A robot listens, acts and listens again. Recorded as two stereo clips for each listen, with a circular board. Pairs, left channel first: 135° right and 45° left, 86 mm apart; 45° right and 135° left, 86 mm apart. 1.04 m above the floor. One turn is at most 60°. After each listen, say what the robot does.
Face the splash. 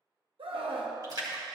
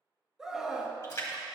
Found it: a splash, straight ahead, 1 to 2 m away.